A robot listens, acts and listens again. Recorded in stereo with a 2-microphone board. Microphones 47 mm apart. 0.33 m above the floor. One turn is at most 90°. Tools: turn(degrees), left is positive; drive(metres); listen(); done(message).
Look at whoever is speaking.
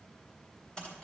listen()
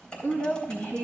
turn(degrees=55)
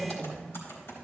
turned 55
turn(degrees=15)
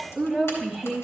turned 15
done("Found it: a woman speaking, straight ahead, 1 to 2 m away.")